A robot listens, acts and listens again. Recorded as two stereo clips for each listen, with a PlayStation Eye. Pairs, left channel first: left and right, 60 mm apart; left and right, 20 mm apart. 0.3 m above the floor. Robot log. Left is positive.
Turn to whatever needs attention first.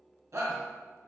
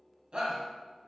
note: The shout: about 55° right or 125° right.
cmd yaw -55
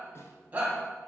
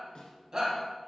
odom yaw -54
note: So it is at 30° right.
cmd yaw -30
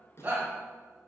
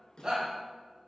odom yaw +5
note: The shout is now 30° right.
cmd yaw -30
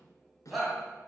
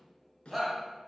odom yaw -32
end: Facing the shout.